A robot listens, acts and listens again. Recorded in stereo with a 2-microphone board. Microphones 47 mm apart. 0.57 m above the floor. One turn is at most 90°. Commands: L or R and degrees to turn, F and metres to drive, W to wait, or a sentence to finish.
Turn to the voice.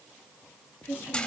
L50
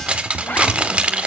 W
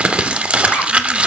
W
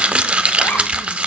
I heard a woman speaking, but can't make it out now. It was about straight ahead or 80° left.